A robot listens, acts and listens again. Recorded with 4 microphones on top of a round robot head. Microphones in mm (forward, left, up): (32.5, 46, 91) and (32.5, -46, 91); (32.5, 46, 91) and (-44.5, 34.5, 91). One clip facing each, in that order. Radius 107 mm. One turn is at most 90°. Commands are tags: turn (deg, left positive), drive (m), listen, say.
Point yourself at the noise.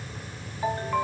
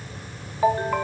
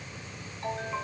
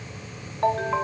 <turn deg="-90"/>
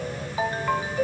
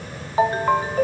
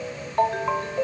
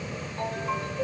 <turn deg="-40"/>
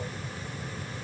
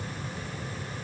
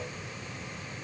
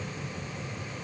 <listen/>
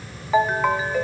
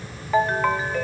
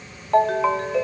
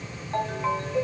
<say>Found it: a ringtone, straight ahead, under 1 m away.</say>